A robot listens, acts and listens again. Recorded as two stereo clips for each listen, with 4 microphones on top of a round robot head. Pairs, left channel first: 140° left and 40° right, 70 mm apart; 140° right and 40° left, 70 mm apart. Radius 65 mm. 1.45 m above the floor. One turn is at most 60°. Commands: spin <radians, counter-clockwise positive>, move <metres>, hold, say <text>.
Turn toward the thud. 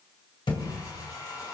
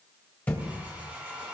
spin 1.05
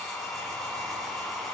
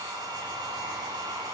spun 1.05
spin 1.05
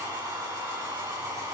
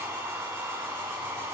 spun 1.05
spin 0.61
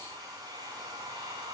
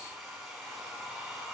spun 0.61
say I heard a thud from this way, but can't make it out now.